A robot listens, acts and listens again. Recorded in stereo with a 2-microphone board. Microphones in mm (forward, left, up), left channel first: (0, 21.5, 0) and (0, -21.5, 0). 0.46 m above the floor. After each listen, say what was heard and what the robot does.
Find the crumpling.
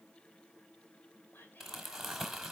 Turn 30° right.
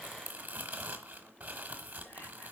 So it is at 145° right. Turn 145° right.
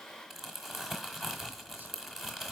Facing the crumpling, 1 to 2 m away.